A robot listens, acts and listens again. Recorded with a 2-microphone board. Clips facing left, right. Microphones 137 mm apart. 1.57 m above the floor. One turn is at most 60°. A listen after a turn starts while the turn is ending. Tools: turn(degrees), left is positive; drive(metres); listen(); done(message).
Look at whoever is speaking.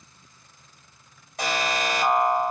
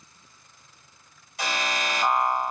listen()
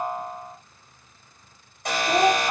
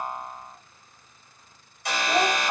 turn(degrees=30)
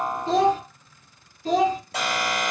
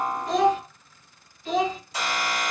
turn(degrees=60)
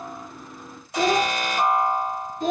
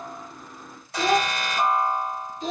turn(degrees=60)
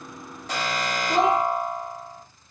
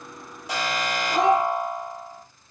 turn(degrees=30)
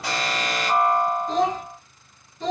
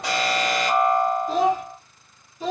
turn(degrees=-10)
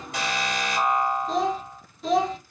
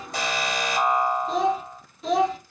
done("Facing the child speaking, under 1 m away.")